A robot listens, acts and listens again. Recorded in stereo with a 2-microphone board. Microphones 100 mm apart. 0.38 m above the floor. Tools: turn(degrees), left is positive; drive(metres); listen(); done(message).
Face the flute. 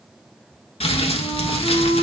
turn(degrees=20)
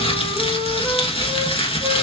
listen()
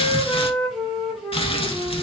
done("Found it: a flute, straight ahead, 1 to 2 m away.")